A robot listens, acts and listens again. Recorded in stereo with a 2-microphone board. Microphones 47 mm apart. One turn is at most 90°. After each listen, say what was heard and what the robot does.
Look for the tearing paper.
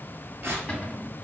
The tearing paper: about 55° right or 125° right. Turn 55° right.
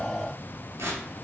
So it is at 70° right. Turn 70° right.
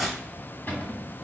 Found it: tearing paper, straight ahead, 1 to 2 m away.